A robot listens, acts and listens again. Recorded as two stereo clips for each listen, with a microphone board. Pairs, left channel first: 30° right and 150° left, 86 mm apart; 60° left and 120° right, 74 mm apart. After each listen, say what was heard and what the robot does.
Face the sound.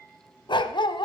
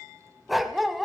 The dog barking: 30° right. Turn 30° right.
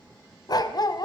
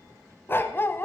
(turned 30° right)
Found it: a dog barking, straight ahead, under 1 m away.